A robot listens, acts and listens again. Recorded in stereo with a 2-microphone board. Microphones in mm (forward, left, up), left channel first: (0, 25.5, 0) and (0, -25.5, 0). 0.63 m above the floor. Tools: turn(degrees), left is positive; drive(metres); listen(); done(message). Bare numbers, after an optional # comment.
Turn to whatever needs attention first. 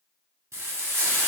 listen()
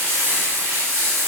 listen()
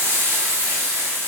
done("I can't make out anything urgent, only frying.")